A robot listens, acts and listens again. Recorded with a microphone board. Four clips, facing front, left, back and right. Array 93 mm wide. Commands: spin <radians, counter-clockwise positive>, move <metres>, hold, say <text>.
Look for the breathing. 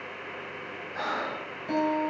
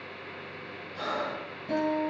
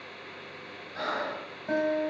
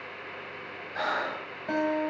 spin -1.31
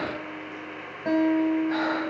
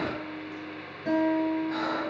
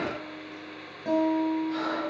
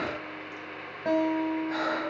spin -0.26
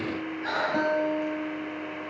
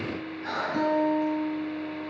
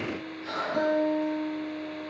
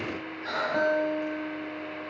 say Facing the breathing, 2 to 4 m away.